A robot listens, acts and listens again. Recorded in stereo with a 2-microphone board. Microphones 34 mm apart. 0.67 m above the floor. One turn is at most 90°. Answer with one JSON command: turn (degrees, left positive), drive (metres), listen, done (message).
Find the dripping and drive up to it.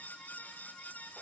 {"listen": true}
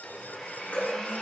{"turn": 50}
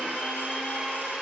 {"listen": true}
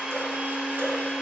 {"listen": true}
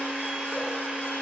{"done": "I heard dripping, but can't make it out now. It was about straight ahead or 80° left. I did not reach it."}